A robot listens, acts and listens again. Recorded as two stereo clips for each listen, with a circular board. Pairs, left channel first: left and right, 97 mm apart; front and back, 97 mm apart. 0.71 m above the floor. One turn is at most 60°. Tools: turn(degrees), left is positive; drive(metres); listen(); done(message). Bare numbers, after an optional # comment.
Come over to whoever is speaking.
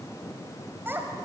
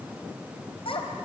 # The child speaking: 20° right.
turn(-20)
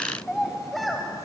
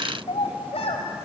drive(1.0)
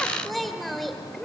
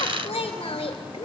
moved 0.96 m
drive(1.0)
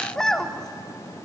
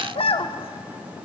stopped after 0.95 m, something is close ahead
done("Arrived at the child speaking, straight ahead.")